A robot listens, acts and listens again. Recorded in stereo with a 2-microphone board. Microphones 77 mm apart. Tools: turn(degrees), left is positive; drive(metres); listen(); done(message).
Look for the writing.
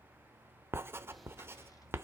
turn(degrees=-30)
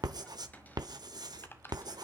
turn(degrees=-120)
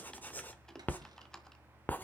turn(degrees=20)
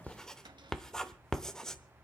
done("Found it: writing, straight ahead, under 1 m away.")